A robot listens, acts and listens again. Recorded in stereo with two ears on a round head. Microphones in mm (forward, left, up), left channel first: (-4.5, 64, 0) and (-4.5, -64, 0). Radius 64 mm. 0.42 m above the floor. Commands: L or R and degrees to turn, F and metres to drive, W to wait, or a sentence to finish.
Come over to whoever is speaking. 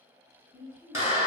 L30
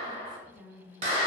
F1.0
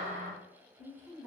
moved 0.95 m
L25
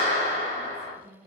L20
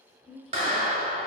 F1.0
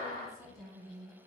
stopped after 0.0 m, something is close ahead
I am next to the woman speaking.